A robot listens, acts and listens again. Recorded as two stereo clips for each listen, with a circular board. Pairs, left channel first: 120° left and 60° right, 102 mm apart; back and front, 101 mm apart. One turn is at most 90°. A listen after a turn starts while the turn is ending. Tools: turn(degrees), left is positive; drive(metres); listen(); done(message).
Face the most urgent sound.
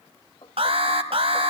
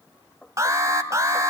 turn(degrees=-55)
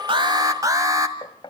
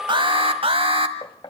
done("Facing the alarm, 1 to 2 m away.")